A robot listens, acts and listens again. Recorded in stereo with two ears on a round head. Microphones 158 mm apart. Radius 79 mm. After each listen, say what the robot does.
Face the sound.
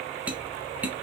Turn 30° right.
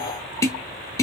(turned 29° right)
Turn 20° left.
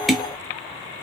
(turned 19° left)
Facing the tapping, under 1 m away.